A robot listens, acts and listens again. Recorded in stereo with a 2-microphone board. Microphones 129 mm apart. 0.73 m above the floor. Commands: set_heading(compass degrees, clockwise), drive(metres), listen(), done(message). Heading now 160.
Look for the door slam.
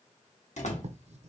set_heading(95)
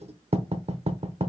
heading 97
listen()
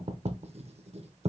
done("I heard a door slam, but can't make it out now. It was about straight ahead or 55° left.")